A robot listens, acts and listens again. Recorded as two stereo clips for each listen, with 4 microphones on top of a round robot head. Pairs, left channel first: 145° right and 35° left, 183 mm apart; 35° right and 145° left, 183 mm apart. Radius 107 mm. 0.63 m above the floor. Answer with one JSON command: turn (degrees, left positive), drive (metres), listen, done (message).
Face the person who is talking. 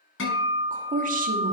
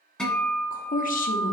{"done": "Facing the woman speaking."}